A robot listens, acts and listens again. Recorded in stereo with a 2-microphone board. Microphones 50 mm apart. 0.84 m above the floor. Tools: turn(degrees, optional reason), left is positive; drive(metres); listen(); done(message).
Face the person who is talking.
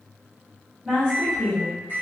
turn(degrees=-20, reason="The woman speaking: about 20° right or 160° right.")
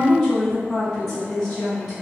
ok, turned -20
done("Found it: a woman speaking, straight ahead, 1 to 2 m away.")